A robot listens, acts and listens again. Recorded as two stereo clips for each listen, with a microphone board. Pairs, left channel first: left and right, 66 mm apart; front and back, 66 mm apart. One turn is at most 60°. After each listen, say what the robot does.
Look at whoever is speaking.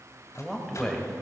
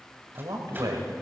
Turn 60° left.
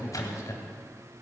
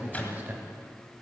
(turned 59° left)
Turn 60° left.
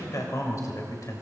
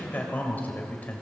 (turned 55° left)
Turn 60° left.
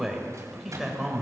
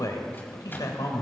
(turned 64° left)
Found it: a man speaking, straight ahead, 2 to 4 m away.